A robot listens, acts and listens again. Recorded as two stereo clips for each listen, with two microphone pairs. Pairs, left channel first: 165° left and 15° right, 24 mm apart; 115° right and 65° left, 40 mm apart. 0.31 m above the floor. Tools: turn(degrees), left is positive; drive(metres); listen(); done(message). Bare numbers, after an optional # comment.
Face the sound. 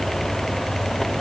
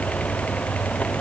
listen()
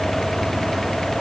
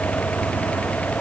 listen()
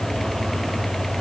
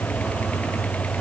done("I can't make out anything.")